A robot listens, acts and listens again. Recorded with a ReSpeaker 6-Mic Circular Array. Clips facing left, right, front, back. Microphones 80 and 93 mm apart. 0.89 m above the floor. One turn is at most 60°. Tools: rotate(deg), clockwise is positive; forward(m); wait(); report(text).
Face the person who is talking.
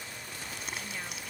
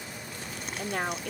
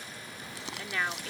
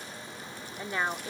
rotate(60)
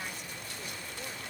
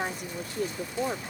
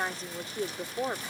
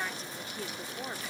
rotate(55)
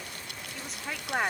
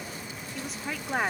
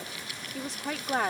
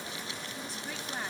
report("Facing the woman speaking.")